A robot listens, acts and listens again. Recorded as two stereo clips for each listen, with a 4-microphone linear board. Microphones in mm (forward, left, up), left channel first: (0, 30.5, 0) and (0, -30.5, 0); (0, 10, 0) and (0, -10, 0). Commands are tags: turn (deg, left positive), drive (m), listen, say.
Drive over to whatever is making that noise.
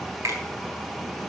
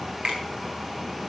<turn deg="-70"/>
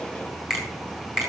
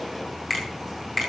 <drive m="1.0"/>
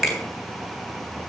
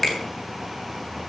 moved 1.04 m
<drive m="1.0"/>
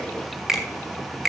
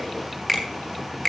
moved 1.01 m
<drive m="1.0"/>
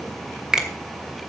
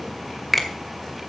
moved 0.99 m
<turn deg="-15"/>
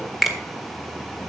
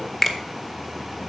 <drive m="1.0"/>
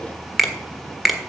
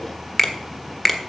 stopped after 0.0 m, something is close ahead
<say>Arrived at the finger snap, straight ahead.</say>